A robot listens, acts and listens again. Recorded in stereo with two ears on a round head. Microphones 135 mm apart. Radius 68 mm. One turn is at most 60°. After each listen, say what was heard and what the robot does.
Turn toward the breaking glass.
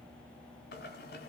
Keep listening.
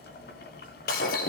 The breaking glass: about 60° left or 120° left. Turn 60° left.
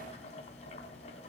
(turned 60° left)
Keep listening.
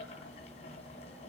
I heard breaking glass, but can't make it out now. It was about straight ahead or 60° left.